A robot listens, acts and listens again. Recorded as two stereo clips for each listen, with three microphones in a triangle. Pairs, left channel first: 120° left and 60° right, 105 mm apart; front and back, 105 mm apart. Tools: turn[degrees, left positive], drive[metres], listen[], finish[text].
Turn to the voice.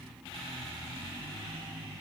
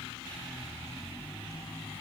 Action: listen[]
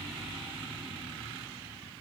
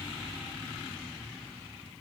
Action: listen[]
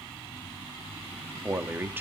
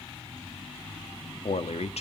Thought: The man speaking: 10° left.
Action: turn[10]
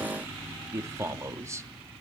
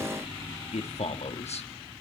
Action: finish[Facing the man speaking, 1 to 2 m away.]